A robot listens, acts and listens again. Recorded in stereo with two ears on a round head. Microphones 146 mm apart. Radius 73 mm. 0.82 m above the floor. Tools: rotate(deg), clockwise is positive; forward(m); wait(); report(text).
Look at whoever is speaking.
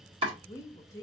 rotate(-20)
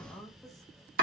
report("Found it: a woman speaking, straight ahead, under 1 m away.")